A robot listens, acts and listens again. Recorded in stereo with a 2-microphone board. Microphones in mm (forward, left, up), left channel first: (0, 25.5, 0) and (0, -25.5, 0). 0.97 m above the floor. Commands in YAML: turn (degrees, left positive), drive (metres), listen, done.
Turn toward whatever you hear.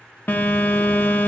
turn: 40
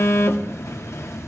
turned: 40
turn: 100
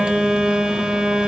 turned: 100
turn: -20
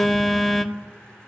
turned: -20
done: "Facing the phone buzzing."